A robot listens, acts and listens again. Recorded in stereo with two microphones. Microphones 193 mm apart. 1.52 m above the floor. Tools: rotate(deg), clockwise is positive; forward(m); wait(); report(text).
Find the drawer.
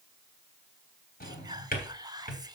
rotate(-50)
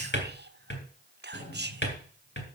rotate(-75)
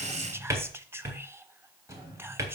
rotate(15)
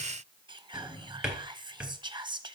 report("Found it: a drawer, straight ahead, 2 to 4 m away.")